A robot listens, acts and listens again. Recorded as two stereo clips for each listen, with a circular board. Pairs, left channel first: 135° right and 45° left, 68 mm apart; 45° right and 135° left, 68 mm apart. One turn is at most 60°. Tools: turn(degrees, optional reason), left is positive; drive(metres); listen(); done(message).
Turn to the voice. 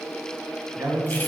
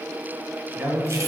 turn(degrees=60, reason="The man speaking: 80° left.")
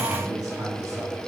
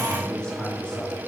turn(degrees=30, reason="The man speaking is now 30° left.")
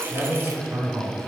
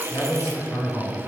done("Facing the man speaking.")